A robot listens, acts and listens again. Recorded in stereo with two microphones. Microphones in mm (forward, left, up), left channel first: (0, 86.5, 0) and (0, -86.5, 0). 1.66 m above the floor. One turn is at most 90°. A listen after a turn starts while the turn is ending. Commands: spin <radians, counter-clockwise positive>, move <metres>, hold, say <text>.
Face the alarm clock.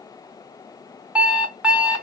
spin -0.52
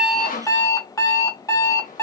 spin 0.35
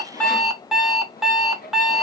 say Found it: an alarm clock, straight ahead, 1 to 2 m away.